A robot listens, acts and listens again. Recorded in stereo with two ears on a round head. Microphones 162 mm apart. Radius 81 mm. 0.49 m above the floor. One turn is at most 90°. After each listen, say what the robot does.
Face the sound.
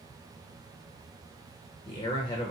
Turn 25° left.
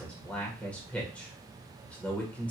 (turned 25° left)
Turn 10° left.
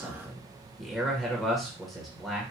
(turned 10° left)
Facing the man speaking.